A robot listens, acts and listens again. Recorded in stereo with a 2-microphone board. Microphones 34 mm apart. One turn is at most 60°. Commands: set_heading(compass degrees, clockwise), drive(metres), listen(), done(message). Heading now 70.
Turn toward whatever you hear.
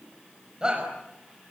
set_heading(95)
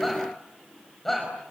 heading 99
done("Facing the shout, over 4 m away.")